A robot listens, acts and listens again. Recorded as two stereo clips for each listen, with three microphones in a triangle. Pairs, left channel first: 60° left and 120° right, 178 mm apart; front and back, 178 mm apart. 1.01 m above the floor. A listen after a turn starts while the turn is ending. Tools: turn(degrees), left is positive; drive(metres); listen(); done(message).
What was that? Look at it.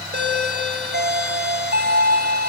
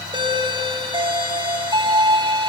turn(degrees=-120)
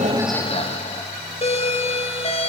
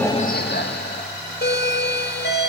done("Found it: a doorbell, straight ahead.")